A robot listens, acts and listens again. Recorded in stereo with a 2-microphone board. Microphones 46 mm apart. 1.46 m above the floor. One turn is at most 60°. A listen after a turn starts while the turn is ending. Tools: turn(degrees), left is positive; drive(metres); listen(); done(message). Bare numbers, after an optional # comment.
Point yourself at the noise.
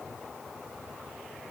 listen()
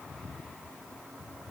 listen()
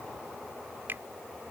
# The finger snap: about 55° right or 125° right.
turn(-55)
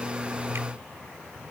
listen()
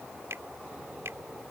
# So it is at 70° right.
turn(-60)
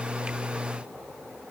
# Nothing new. It was at 10° right.
turn(-10)
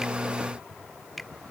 done("Found it: a finger snap, straight ahead.")